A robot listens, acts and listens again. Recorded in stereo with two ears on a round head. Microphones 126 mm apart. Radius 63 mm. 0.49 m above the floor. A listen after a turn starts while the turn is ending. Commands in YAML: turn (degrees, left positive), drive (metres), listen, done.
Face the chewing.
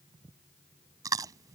turn: -25
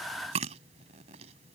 turn: -130
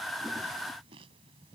listen: true
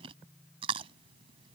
turn: -40
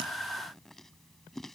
done: "Found it: chewing, straight ahead."